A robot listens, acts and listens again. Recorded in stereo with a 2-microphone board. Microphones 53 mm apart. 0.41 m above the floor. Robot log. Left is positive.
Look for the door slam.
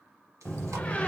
note: The door slam: about 25° left or 155° left.
cmd yaw +25
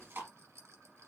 cmd idle
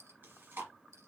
end: I heard a door slam, but can't make it out now. It was about straight ahead or 130° left.